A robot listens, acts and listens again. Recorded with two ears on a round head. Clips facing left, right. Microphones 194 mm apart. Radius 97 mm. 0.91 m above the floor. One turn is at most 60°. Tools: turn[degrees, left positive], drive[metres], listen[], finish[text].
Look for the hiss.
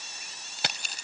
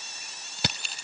Action: listen[]
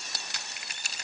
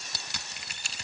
Action: listen[]
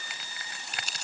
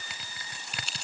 Action: finish[I can't make out a hiss to turn to.]